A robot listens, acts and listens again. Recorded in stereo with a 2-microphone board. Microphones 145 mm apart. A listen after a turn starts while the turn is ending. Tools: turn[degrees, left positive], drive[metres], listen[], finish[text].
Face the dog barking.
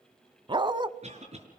Thought: The dog barking: about 35° right or 145° right.
Action: turn[-35]
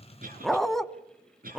Action: finish[Facing the dog barking, under 1 m away.]